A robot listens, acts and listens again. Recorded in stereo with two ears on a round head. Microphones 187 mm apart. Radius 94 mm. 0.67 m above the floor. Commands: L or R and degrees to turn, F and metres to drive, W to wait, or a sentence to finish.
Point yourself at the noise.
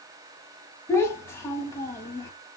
L30
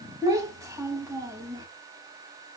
R15
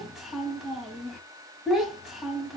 Found it: a child speaking, straight ahead.